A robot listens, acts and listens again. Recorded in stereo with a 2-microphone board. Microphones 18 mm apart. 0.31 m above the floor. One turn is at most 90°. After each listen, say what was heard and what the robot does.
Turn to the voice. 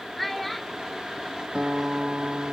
Turn 30° left.
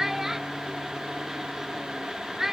So it is at 20° right. Turn 20° right.
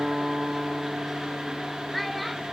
Keep listening.
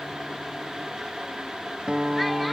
Keep listening.
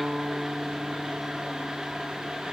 Facing where the child speaking came from. I can't hear it now.